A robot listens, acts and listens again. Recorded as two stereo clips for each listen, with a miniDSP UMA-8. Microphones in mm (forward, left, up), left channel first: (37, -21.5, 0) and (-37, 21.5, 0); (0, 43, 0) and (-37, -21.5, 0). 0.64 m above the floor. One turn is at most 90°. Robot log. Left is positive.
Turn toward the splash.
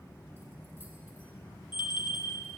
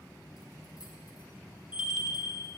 cmd idle
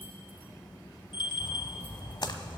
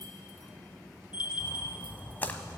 end: Facing the splash, under 1 m away.